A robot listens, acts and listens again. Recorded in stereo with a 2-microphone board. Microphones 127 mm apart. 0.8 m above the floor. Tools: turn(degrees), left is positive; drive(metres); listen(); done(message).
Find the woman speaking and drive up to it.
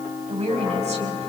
turn(degrees=-60)
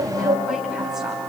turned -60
listen()
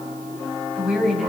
drive(metres=1.0)
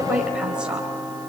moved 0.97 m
listen()
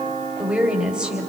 turn(degrees=-10)
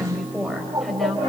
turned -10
drive(metres=1.0)
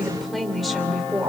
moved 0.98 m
drive(metres=1.0)
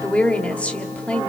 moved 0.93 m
turn(degrees=10)
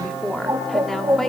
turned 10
drive(metres=1.0)
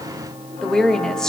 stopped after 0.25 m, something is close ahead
done("I am next to the woman speaking.")